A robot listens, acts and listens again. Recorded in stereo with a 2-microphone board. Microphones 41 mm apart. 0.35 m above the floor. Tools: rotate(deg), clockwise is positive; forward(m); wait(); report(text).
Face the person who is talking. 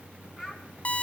rotate(30)
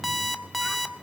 wait()
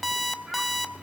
wait()
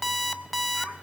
report("I heard a child speaking, but can't make it out now. It was about 25° left or 145° right.")